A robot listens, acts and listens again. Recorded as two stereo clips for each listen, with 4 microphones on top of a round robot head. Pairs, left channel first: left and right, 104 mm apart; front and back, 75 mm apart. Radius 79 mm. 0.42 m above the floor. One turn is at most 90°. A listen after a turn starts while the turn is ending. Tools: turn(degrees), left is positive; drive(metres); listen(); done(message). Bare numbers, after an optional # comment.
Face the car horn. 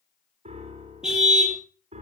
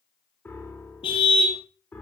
done("Found it: a car horn, straight ahead, over 4 m away.")